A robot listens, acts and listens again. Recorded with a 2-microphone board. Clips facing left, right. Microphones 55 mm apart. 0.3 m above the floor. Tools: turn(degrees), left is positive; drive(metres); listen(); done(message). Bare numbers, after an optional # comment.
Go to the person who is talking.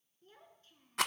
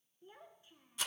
# The child speaking: about 15° right or 165° right.
turn(-15)
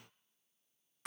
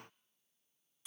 listen()
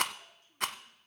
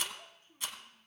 # So it is at 150° right.
turn(-150)
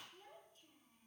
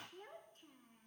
# The child speaking is now 55° right.
turn(-55)
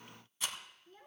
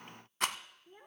# The child speaking is now 25° right.
turn(-25)
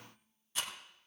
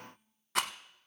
listen()
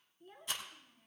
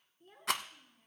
drive(1.0)
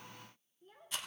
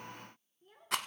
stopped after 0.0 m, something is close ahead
done("Something is in my way. I am facing the child speaking but have not reached it.")